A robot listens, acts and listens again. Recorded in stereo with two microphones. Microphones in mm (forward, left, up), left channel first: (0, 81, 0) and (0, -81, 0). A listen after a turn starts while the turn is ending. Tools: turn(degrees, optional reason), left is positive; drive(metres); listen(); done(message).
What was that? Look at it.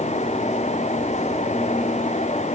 listen()
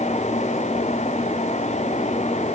listen()
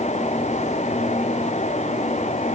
done("I can't make out anything to turn to.")